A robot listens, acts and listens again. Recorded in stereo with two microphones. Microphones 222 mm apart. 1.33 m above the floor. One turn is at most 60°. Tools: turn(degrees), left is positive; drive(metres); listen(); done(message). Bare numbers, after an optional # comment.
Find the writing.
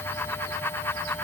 listen()
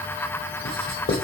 turn(60)
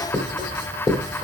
# So it is at 20° left.
turn(20)
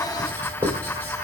# The writing is now 10° left.
turn(10)
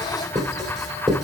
done("Facing the writing, 2 to 4 m away.")